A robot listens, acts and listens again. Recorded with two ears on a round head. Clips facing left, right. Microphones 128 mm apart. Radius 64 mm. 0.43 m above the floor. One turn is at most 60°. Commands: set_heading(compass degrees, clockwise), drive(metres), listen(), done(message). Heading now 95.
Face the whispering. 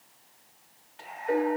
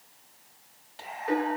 set_heading(140)
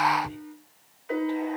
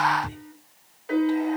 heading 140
set_heading(200)
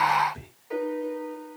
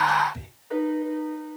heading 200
set_heading(225)
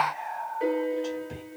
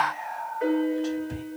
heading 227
done("Found it: whispering, straight ahead, 2 to 4 m away.")